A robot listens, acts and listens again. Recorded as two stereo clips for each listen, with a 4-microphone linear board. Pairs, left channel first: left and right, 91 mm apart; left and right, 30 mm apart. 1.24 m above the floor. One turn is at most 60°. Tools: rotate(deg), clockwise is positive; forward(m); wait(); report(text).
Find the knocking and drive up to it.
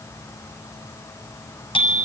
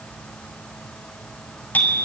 wait()
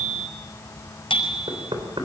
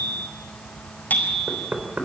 rotate(60)
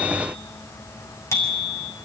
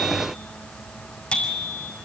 wait()
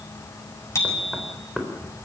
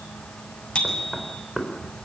forward(1.0)
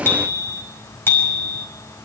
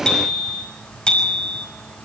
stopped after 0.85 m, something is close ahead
wait()
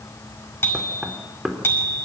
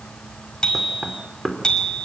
report("Blocked. The knocking is further on, straight ahead.")